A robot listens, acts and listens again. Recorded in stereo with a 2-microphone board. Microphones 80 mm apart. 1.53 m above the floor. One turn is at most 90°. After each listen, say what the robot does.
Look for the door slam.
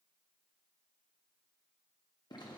Keep listening.
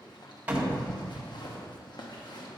Turn 20° right.
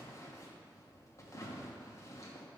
Keep listening.
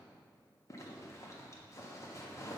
I heard a door slam, but can't make it out now. It was about straight ahead or 140° right.